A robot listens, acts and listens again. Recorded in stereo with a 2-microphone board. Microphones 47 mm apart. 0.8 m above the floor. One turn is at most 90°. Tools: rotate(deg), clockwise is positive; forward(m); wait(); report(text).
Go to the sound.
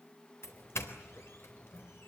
rotate(-75)
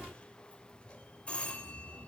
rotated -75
rotate(-25)
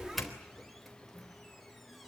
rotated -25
forward(1.0)
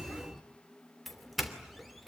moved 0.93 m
forward(1.0)
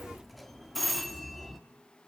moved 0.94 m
forward(1.0)
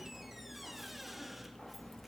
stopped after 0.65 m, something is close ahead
wait()
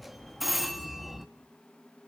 report("I am next to the doorbell.")